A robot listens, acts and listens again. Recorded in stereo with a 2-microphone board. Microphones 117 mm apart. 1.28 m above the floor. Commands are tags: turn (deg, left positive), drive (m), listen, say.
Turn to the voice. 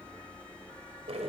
<listen/>
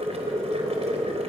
<listen/>
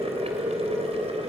<say>I can't make out anyone speaking to turn to.</say>